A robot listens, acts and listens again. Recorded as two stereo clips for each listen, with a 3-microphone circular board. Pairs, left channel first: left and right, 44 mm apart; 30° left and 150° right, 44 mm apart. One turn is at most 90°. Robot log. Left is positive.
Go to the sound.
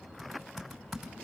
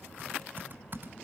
note: The typing on a keyboard: 175° left.
cmd yaw +90
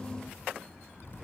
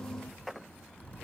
note: The typing on a keyboard is now 80° left.
cmd yaw +80
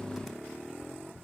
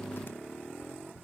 cmd fwd 1.0
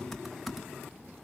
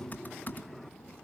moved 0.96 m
cmd fwd 1.0
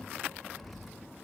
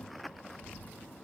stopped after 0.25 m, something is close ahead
end: Arrived at the typing on a keyboard, straight ahead.